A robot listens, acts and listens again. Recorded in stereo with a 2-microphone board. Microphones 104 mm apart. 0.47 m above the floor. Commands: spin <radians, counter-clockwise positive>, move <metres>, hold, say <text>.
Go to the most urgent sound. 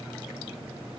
hold
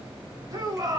spin -0.61
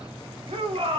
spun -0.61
spin -1.75
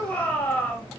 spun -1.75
spin 0.35
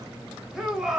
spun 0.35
move 1.0
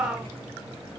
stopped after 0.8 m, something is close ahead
spin -0.17
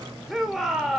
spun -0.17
say I am next to the shout.